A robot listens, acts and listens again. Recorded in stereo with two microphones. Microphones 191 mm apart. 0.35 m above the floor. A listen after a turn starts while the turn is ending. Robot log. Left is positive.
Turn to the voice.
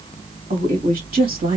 note: The woman speaking: about 50° right or 130° right.
cmd yaw -50
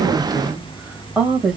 end: Found it: a woman speaking, straight ahead, 2 to 4 m away.